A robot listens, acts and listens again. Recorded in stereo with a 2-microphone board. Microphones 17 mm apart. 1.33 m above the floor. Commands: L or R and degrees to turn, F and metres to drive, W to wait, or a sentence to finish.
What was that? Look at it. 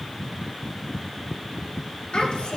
L65
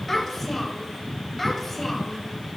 Found it: a child speaking, straight ahead.